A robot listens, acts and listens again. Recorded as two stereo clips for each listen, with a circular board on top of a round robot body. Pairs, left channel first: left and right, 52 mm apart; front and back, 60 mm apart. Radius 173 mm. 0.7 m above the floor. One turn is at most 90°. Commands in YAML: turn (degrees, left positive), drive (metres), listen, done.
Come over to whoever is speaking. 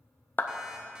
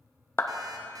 listen: true
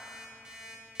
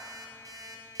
listen: true
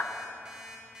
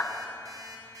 done: "I can't make out anyone speaking, only a clap and an alarm clock."